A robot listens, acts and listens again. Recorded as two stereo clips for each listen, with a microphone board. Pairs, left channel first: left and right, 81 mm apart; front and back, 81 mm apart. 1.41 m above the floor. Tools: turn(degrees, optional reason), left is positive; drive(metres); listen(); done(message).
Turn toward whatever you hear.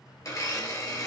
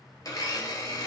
turn(degrees=40, reason="The blender: 40° left.")
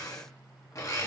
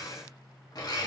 turn(degrees=40, reason="The blender is now 40° left.")
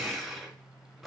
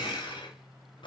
done("Found it: a blender, straight ahead, 1 to 2 m away.")